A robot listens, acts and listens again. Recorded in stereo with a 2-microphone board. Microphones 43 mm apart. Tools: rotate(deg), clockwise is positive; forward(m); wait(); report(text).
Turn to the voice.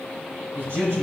rotate(90)
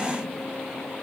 wait()
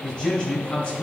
rotate(-25)
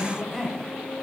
report("Facing the man speaking.")